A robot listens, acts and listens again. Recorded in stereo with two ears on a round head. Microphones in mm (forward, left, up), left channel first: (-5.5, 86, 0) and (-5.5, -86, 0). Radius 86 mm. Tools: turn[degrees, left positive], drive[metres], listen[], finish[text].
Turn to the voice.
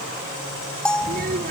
Thought: The child speaking: about 50° right or 130° right.
Action: turn[-50]
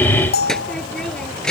Action: finish[Facing the child speaking.]